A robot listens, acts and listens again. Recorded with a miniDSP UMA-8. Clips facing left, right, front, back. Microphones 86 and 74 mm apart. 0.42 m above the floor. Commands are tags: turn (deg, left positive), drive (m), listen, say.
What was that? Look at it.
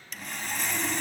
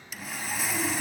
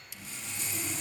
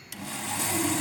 <turn deg="-175"/>
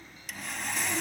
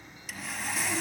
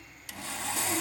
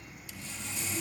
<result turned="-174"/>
<say>Facing the sawing, 1 to 2 m away.</say>